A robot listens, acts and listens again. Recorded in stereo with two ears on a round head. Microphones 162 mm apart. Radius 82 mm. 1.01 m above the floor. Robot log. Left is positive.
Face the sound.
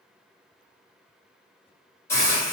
cmd yaw +30
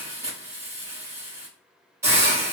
note: So it is at 15° right.
cmd yaw -15
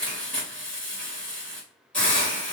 end: Found it: a hiss, straight ahead.